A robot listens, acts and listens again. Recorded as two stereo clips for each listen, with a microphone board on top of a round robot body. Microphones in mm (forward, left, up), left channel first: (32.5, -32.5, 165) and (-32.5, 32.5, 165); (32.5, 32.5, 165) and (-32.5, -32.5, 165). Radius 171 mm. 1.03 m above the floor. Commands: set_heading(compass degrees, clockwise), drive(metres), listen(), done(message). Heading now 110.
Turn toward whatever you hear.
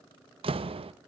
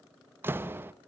set_heading(315)
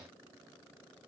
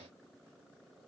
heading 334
set_heading(314)
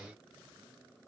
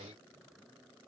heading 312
done("Facing where the door slam came from. I can't hear it now.")